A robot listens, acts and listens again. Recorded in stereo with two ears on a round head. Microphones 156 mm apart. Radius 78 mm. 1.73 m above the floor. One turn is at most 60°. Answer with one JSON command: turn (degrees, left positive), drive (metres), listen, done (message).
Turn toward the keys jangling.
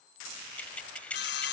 {"turn": 30}
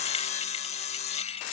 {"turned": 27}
{"listen": true}
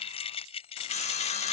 {"turn": 60}
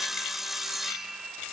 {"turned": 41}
{"turn": 60}
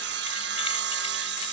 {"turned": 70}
{"turn": 35}
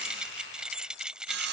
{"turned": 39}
{"done": "Found it: keys jangling, straight ahead."}